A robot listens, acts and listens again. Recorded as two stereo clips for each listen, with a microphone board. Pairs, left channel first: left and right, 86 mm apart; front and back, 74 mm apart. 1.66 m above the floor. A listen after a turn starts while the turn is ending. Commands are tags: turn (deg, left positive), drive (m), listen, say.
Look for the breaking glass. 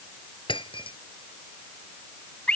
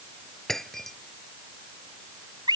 <turn deg="85"/>
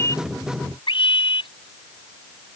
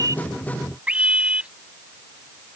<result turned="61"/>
<turn deg="25"/>
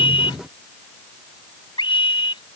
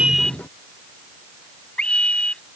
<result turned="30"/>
<say>Facing where the breaking glass came from. I can't hear it now.</say>